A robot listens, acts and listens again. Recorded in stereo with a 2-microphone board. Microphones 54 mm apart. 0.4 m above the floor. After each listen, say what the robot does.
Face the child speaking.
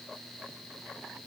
Keep listening.
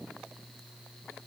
Keep listening.
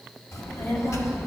Turn 55° left.
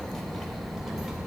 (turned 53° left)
Turn 10° right.
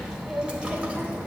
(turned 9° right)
Turn 30° right.
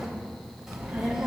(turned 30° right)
Turn 10° right.
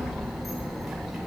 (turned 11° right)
Facing the child speaking.